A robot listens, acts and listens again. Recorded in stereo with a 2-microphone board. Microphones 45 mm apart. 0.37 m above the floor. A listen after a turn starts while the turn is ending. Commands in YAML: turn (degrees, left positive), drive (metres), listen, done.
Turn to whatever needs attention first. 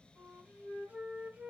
listen: true
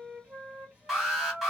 turn: -30
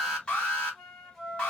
turn: 25
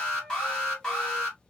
turn: 15
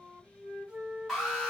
done: "Found it: an alarm, straight ahead."